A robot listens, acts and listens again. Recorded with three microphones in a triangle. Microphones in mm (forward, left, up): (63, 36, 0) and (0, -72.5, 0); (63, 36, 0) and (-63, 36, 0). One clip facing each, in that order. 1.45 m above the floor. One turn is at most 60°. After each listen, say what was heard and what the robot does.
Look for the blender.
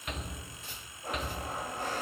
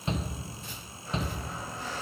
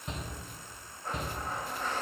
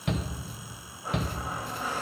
The blender: 100° left. Turn 60° left.
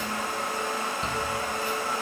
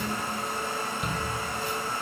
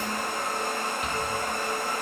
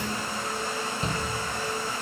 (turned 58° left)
The blender is now 40° left. Turn 40° left.
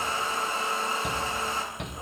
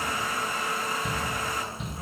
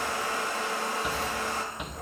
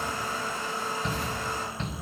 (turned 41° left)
Found it: a blender, straight ahead.